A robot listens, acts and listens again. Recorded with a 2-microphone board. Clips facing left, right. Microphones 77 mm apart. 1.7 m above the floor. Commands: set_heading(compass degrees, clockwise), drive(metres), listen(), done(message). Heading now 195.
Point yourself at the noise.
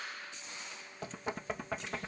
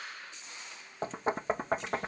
set_heading(230)
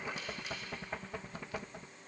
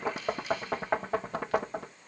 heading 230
set_heading(340)
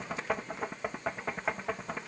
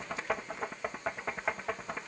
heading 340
done("Found it: knocking, straight ahead.")